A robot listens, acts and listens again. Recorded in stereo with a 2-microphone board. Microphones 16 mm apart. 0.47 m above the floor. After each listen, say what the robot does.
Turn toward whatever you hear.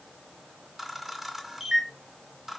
Turn 30° right.
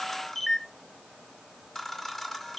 Turn 20° left.
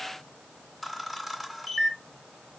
Facing the camera shutter, under 1 m away.